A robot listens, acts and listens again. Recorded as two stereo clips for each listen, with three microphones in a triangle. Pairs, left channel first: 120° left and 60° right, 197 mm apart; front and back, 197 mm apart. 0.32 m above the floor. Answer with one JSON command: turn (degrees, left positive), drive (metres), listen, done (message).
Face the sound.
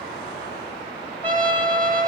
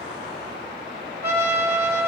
{"turn": -160}
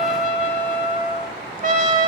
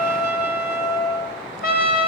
{"turn": -20}
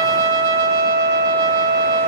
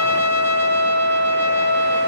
{"done": "Found it: a trumpet, straight ahead, 1 to 2 m away."}